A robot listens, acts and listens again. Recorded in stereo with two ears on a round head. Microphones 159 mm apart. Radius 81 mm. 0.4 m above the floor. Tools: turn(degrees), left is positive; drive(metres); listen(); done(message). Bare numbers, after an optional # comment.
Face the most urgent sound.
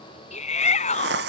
# The shout: about 40° left or 140° left.
turn(40)
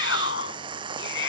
# So it is at 100° left.
turn(100)
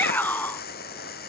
# The shout is now 10° left.
turn(10)
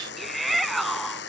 done("Found it: a shout, straight ahead.")